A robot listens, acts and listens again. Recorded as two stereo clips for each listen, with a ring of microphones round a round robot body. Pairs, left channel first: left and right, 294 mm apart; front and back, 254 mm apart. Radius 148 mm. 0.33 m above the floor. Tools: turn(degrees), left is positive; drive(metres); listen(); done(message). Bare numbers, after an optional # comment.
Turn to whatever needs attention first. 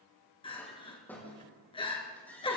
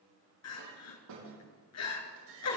# The crying: 15° left.
turn(15)
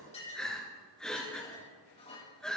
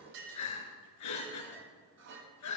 done("Found it: crying, straight ahead.")